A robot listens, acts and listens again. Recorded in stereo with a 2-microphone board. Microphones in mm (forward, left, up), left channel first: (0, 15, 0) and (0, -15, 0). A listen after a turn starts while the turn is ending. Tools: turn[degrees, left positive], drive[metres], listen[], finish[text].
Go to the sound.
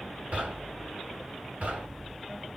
Thought: The knocking: about 60° right or 120° right.
Action: turn[-60]
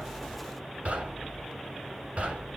Thought: So it is at 55° right.
Action: turn[-55]
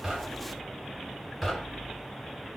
Action: drive[1.0]
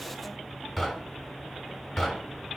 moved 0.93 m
Action: drive[1.0]
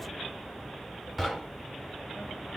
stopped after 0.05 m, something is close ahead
Action: finish[Arrived at the knocking, straight ahead.]